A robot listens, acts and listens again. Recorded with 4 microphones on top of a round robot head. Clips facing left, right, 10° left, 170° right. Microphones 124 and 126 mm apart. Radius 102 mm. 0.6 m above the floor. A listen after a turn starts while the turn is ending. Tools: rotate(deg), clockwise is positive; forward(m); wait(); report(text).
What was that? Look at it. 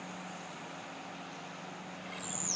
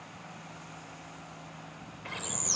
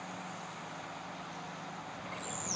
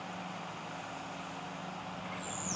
rotate(60)
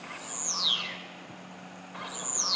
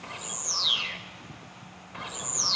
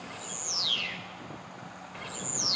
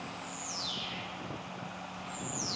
report("Found it: a bird, straight ahead.")